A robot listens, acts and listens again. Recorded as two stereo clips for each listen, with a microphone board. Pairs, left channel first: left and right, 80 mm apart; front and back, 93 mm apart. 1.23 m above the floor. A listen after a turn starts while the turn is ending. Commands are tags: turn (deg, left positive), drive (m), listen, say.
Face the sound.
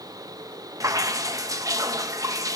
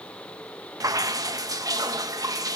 <turn deg="-130"/>
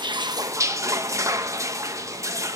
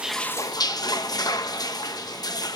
<turn deg="-45"/>
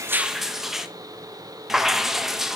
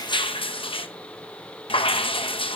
<say>Found it: dripping, straight ahead, under 1 m away.</say>